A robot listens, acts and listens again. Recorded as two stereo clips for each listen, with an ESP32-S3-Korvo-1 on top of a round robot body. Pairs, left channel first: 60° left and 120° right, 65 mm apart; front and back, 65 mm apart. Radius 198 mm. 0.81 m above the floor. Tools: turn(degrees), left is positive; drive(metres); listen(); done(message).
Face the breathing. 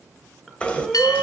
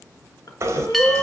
turn(degrees=-30)
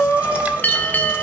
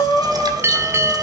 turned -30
turn(degrees=10)
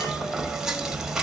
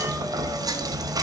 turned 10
listen()
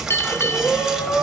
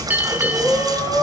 done("Found it: breathing, straight ahead, 2 to 4 m away.")